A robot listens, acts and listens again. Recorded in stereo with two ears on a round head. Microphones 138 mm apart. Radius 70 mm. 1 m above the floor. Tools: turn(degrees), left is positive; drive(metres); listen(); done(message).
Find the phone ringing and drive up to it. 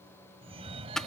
turn(degrees=-40)
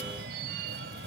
turn(degrees=-100)
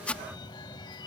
turn(degrees=30)
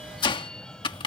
drive(metres=1.0)
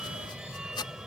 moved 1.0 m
drive(metres=1.0)
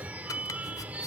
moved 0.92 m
turn(degrees=-10)
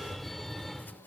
drive(metres=1.0)
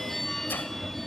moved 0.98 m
drive(metres=1.0)
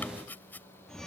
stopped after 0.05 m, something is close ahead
done("I am next to the phone ringing.")